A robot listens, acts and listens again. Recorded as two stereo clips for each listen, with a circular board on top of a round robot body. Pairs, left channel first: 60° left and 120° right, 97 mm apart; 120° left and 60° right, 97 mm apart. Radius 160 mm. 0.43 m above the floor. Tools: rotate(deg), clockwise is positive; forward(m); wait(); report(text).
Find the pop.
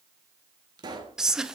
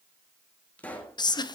rotate(165)
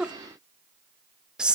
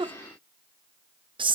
report("I heard a pop from this way, but can't make it out now.")